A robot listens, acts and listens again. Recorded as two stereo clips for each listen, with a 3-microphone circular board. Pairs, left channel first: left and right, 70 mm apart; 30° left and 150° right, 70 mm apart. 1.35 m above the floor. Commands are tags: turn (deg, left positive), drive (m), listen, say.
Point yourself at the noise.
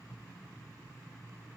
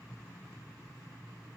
<listen/>
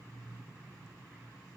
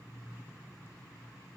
<listen/>
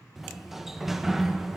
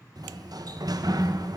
<turn deg="-175"/>
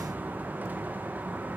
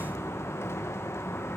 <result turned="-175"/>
<turn deg="-25"/>
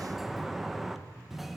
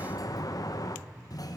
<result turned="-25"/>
<say>Found it: a sliding door, straight ahead.</say>